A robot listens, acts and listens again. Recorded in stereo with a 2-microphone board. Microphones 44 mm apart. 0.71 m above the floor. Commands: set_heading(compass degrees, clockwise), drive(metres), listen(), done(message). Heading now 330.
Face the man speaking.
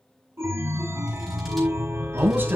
set_heading(15)
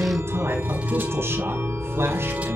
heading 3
set_heading(103)
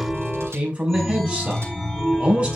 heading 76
set_heading(106)
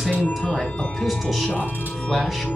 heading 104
done("Facing the man speaking, over 4 m away.")